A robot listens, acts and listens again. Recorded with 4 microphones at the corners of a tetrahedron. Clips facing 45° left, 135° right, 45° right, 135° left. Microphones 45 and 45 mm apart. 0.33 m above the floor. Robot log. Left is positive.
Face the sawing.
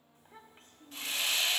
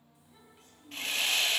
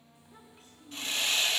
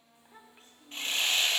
note: The sawing: 175° right.
cmd yaw -175
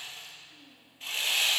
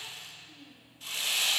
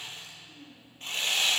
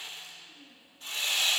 end: Found it: sawing, straight ahead.